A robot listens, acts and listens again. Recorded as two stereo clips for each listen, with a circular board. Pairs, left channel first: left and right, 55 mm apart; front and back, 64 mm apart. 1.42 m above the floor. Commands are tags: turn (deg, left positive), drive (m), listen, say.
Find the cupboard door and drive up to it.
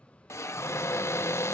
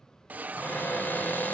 <turn deg="60"/>
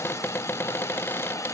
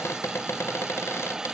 <turn deg="45"/>
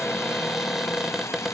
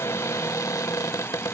<drive m="1.0"/>
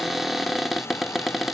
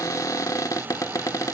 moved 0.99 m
<drive m="1.0"/>
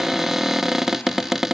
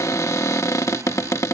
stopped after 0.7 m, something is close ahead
<turn deg="-10"/>
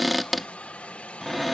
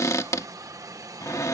<say>I am next to the cupboard door.</say>